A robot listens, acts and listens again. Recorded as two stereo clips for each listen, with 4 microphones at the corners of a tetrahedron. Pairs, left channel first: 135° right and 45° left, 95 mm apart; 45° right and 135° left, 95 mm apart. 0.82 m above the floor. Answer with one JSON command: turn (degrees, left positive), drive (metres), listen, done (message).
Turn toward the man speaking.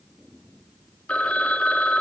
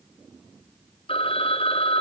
{"listen": true}
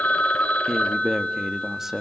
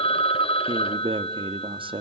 {"turn": 130}
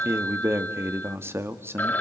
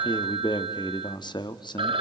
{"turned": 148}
{"turn": -15}
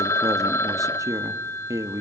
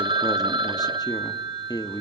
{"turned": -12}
{"done": "Found it: a man speaking, straight ahead, 1 to 2 m away."}